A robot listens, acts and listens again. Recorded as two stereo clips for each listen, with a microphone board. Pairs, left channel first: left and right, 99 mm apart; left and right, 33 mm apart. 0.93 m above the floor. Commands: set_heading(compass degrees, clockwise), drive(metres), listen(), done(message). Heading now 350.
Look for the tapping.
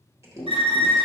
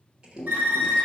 set_heading(330)
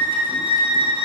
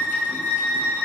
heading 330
listen()
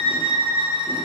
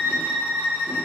listen()
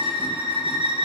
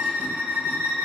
done("I heard tapping, but can't make it out now. It was about straight ahead or 140° left.")